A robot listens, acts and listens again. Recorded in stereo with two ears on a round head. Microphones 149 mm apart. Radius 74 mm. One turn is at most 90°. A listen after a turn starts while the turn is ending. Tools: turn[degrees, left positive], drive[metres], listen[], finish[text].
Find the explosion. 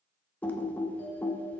Action: listen[]
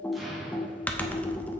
Action: turn[30]
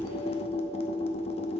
Action: listen[]
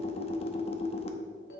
Action: finish[I heard an explosion, but can't make it out now. It was about 30° right or 150° left.]